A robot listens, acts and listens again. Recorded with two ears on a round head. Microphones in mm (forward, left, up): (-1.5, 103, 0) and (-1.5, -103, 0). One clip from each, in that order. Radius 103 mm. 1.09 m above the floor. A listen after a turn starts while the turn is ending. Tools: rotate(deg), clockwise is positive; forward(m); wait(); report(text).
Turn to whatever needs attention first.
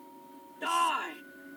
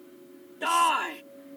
rotate(30)
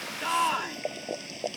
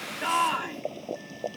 rotate(-15)
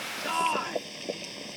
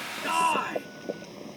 report("Found it: a shout, straight ahead.")